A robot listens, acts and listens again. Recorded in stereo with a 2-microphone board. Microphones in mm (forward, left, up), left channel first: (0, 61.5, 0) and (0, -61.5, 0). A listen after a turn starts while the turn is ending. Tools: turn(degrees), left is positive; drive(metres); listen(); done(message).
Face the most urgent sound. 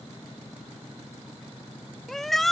turn(degrees=30)
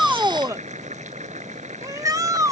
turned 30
turn(degrees=-25)
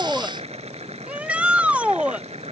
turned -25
turn(degrees=-10)
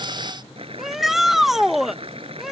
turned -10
done("Found it: a shout, straight ahead.")